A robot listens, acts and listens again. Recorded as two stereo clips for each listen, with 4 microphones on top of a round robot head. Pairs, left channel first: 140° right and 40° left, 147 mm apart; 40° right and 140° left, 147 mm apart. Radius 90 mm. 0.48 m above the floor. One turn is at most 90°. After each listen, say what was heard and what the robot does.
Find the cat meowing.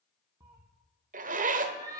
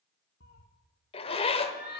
The cat meowing: 25° right. Turn 25° right.
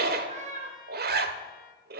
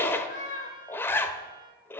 Facing the cat meowing.